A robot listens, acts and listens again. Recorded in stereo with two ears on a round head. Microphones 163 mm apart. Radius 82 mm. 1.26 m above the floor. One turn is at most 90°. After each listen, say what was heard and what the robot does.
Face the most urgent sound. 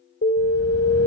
The alarm: about 50° left or 130° left. Turn 50° left.
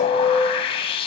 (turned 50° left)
Facing the alarm, 2 to 4 m away.